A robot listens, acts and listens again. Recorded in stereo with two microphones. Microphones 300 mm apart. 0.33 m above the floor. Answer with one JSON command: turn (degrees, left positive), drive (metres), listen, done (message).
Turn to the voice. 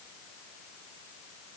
{"listen": true}
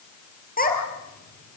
{"turn": 30}
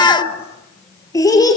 {"turn": 15}
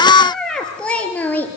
{"done": "Found it: a child speaking, straight ahead."}